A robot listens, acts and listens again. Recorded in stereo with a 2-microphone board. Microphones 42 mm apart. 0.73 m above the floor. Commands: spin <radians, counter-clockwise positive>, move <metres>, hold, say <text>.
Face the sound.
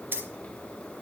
spin -1.13
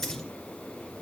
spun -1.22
hold
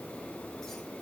hold
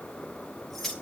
say Found it: keys jangling, straight ahead.